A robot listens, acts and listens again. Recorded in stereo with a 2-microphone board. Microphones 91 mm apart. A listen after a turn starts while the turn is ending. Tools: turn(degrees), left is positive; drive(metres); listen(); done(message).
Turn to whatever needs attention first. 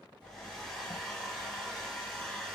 listen()
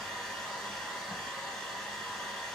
listen()
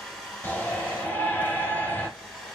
turn(degrees=20)
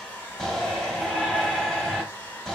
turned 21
done("Found it: a shout, straight ahead, 1 to 2 m away.")